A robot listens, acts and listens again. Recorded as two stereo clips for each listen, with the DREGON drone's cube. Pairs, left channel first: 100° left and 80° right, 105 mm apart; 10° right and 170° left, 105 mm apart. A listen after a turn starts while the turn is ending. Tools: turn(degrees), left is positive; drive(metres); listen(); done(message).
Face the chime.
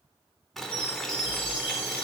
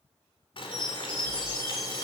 turn(degrees=120)
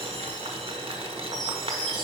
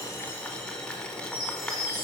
turn(degrees=15)
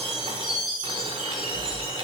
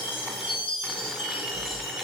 done("Facing the chime.")